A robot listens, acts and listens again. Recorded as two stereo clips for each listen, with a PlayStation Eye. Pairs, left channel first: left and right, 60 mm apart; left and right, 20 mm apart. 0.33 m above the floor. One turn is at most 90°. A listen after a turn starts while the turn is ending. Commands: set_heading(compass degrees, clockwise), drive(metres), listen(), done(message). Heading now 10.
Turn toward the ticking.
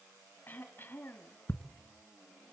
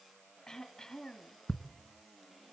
set_heading(330)
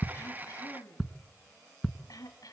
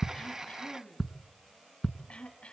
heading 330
done("Facing the ticking.")